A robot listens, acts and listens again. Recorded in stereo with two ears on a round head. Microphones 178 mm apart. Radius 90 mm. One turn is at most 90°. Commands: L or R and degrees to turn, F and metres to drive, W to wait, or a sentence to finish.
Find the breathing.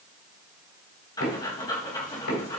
L20
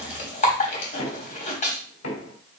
L90
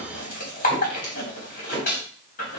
L40
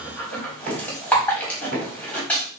L10
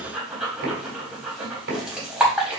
Found it: breathing, straight ahead.